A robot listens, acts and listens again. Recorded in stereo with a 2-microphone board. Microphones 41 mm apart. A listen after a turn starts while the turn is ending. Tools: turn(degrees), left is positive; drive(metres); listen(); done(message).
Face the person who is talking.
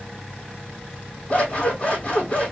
listen()
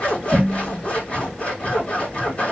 listen()
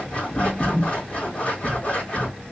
done("I can't make out anyone speaking, only scissors.")